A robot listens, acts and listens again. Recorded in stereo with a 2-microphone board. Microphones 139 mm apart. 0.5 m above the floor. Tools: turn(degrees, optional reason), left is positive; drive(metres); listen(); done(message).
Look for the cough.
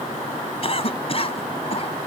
turn(degrees=45, reason="The cough: about 45° left or 135° left.")
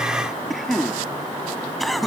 done("Found it: a cough, straight ahead.")